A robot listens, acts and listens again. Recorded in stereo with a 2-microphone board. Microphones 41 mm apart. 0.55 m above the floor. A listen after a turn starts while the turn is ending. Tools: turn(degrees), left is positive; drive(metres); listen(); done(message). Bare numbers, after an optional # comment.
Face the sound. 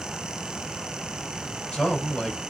turn(30)
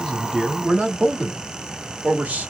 # So it is at 40° right.
turn(-40)
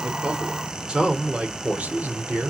# The man speaking is now 40° right.
turn(-40)
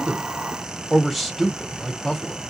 done("Facing the man speaking.")